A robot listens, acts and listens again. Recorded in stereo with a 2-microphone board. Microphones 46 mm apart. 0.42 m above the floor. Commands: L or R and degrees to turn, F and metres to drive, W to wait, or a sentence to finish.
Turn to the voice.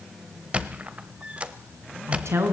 R90
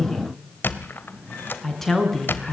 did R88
Facing the woman speaking, over 4 m away.